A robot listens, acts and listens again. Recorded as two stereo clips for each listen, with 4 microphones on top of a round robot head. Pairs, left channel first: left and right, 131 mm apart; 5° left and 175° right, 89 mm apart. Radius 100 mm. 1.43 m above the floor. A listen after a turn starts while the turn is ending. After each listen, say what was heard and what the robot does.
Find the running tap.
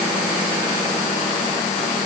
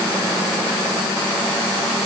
Keep listening.
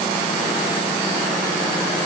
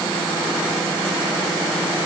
Keep listening.
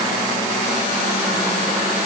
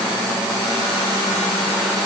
I can't make out a running tap to turn to.